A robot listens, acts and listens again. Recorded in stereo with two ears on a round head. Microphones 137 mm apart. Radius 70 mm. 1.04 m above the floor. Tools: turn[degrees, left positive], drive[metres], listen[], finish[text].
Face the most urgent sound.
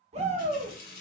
Thought: The shout: about 45° right or 135° right.
Action: turn[-45]
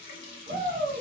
Thought: So it is at 80° right.
Action: turn[-80]
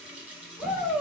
Action: finish[Found it: a shout, straight ahead, 1 to 2 m away.]